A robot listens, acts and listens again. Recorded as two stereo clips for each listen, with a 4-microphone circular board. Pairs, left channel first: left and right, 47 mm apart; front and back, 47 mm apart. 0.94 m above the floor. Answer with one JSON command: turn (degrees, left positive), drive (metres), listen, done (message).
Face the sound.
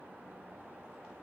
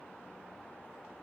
{"listen": true}
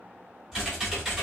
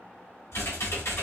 {"turn": -15}
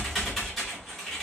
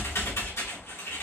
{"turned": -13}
{"done": "Found it: typing on a keyboard, straight ahead."}